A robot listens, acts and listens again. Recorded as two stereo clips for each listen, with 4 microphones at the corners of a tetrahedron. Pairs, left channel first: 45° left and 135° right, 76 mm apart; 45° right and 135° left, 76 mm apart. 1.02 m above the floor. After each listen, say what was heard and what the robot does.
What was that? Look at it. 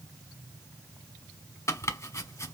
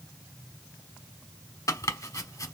Facing the chopping.